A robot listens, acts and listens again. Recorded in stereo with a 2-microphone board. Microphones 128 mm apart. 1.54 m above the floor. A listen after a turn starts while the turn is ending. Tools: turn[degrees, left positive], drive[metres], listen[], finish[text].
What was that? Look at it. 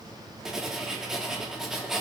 Action: turn[-30]
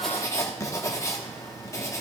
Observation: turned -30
Thought: So it is at 25° left.
Action: turn[25]
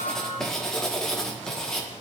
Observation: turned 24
Action: finish[Found it: writing, straight ahead, 1 to 2 m away.]